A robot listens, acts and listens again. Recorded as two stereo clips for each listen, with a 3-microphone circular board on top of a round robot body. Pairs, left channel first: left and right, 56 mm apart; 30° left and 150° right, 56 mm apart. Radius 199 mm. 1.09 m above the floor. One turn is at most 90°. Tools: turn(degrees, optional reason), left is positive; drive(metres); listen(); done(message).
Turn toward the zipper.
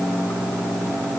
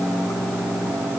listen()
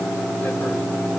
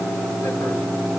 listen()
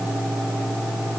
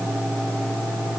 done("I can't make out a zipper to turn to.")